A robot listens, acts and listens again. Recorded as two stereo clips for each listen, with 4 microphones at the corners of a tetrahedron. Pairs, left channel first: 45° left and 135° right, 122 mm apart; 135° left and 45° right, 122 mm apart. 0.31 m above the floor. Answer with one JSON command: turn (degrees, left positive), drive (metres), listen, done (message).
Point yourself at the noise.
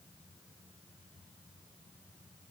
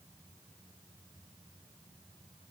{"listen": true}
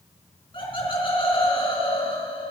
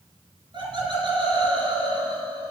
{"done": "Found it: laughter, straight ahead."}